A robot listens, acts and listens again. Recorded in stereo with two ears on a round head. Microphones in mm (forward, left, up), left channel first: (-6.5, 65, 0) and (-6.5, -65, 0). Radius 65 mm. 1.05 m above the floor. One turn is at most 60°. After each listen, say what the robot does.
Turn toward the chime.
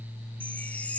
Turn 30° left.
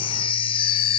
Turn 60° left.
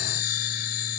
Turn 60° left.
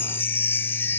Turn 15° left.
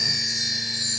Facing the chime.